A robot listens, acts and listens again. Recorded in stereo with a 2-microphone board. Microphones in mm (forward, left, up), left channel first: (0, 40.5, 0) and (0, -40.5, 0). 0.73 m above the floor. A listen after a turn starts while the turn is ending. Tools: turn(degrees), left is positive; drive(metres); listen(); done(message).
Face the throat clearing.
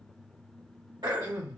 turn(degrees=-60)
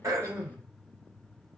listen()
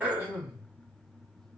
turn(degrees=-20)
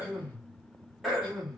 done("Facing the throat clearing, 1 to 2 m away.")